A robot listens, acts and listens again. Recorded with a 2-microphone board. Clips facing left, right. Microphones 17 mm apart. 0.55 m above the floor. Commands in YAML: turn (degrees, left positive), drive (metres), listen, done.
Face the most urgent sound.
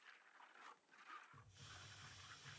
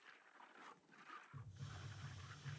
listen: true
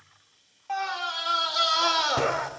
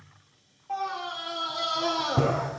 turn: 60
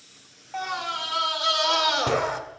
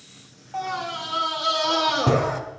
turn: 15
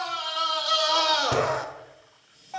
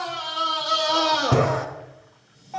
done: "Found it: a scream, straight ahead."